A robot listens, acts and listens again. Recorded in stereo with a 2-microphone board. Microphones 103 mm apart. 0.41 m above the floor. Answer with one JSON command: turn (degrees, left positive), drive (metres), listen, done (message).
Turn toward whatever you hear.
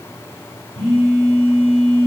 {"turn": -60}
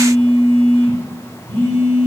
{"turn": -60}
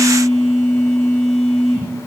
{"done": "Found it: a phone buzzing, straight ahead."}